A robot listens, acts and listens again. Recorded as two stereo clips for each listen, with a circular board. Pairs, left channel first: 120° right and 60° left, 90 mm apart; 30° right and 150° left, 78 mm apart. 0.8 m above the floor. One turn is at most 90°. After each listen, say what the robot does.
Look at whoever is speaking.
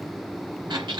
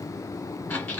Keep listening.
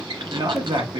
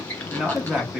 Turn 70° left.
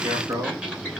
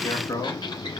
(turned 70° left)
Turn 15° left.
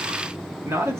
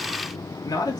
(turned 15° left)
Facing the man speaking.